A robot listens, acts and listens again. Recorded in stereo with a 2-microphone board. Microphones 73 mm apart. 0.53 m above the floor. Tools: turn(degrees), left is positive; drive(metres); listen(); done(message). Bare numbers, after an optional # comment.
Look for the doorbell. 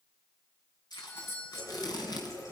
# The doorbell: about 35° left or 145° left.
turn(35)
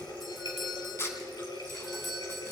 done("Facing the doorbell, 2 to 4 m away.")